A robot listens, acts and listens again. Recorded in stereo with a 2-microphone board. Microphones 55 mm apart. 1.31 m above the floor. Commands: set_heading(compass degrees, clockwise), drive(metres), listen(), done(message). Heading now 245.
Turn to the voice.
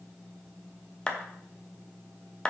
listen()
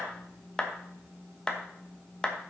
listen()
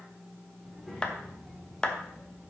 set_heading(215)
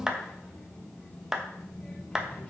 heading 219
set_heading(74)
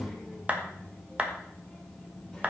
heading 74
done("Facing the child speaking.")